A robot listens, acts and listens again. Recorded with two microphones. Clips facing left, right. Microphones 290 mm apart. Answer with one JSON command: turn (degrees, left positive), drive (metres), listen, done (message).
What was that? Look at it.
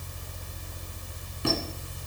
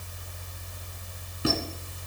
{"turn": -30}
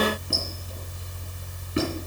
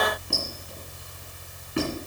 {"turn": 25}
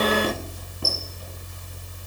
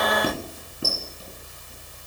{"done": "Found it: a squeak, straight ahead."}